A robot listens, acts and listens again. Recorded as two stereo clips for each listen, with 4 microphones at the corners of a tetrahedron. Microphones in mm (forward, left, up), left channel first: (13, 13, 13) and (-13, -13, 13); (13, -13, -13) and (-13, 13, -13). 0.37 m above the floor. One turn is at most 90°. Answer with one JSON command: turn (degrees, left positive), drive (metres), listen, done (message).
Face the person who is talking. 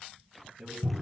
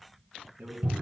{"turn": 90}
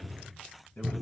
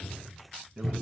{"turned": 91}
{"turn": 60}
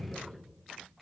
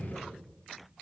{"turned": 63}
{"listen": true}
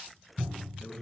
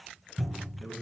{"done": "Found it: a man speaking, straight ahead, 2 to 4 m away."}